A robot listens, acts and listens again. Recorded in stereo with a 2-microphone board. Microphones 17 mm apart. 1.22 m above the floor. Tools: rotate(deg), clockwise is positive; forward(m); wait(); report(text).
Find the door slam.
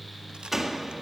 rotate(20)
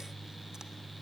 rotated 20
wait()
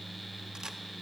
report("I heard a door slam, but can't make it out now. It was about straight ahead or 140° right.")